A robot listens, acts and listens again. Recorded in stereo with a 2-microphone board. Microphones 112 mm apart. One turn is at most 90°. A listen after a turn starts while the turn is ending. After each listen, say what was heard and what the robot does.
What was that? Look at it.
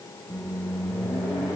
Turn 30° left.
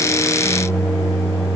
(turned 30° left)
So it is at 150° left. Turn 90° left.
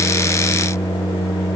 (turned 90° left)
The microwave is now 65° left. Turn 65° left.
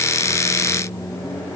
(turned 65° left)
The microwave is now 20° left. Turn 20° left.
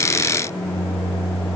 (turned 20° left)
Found it: a microwave, straight ahead.